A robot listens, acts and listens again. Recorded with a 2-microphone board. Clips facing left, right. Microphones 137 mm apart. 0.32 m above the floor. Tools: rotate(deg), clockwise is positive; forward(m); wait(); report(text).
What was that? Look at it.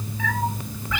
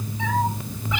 rotate(20)
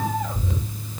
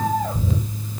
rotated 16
rotate(145)
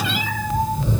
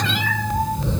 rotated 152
report("Found it: a cat meowing, straight ahead.")